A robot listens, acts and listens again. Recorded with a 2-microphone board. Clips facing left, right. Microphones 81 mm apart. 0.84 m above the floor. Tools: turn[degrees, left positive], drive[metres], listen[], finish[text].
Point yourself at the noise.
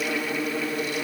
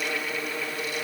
Action: listen[]
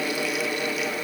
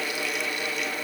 Action: listen[]
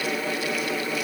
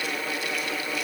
Action: finish[I can't make out anything.]